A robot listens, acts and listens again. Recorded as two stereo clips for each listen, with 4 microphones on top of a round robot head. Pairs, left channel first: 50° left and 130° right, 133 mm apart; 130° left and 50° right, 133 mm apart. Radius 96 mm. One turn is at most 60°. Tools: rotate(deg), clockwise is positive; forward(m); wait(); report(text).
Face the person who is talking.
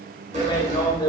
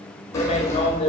rotate(-60)
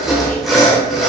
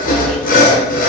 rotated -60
rotate(-40)
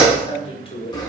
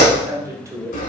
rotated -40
rotate(-15)
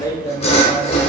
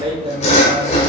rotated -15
report("Facing the man speaking, 1 to 2 m away.")